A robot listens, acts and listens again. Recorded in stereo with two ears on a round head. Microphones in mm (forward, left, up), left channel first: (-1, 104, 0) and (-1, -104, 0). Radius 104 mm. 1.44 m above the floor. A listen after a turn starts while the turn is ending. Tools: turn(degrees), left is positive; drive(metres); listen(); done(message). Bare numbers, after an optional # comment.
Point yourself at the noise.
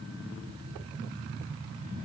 listen()
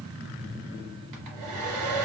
turn(-90)
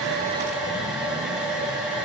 done("Facing the hair dryer.")